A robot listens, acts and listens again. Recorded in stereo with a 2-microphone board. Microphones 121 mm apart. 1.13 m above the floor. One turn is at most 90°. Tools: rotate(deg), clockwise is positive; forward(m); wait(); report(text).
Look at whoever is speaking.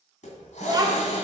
rotate(35)
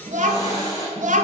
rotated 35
rotate(90)
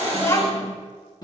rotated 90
rotate(-30)
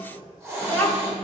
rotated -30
rotate(-15)
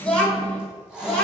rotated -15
rotate(-10)
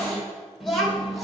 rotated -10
report("Facing the child speaking.")